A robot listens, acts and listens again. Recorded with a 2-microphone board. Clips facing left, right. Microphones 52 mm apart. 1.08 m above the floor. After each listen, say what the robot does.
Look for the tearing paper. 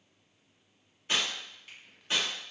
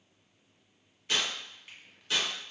Turn 30° left.
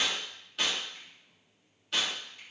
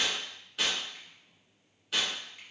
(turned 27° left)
Facing the tearing paper, 1 to 2 m away.